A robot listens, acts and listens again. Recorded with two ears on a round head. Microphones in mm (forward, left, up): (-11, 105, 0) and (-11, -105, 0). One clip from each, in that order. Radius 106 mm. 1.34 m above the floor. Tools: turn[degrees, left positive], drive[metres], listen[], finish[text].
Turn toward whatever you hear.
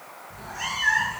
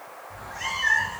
Thought: The cat meowing: about 20° left or 160° left.
Action: turn[20]
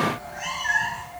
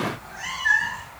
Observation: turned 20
Action: turn[30]
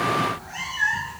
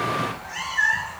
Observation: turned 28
Thought: So it is at 15° right.
Action: turn[-15]
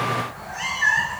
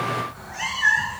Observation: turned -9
Action: finish[Facing the cat meowing.]